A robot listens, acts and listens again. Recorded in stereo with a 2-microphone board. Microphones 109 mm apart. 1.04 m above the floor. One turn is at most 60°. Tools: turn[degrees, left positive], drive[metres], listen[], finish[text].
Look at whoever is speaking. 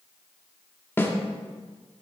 Action: listen[]
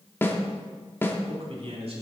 Thought: The man speaking: about 60° right or 120° right.
Action: turn[-60]
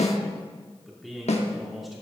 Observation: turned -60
Action: finish[Facing the man speaking.]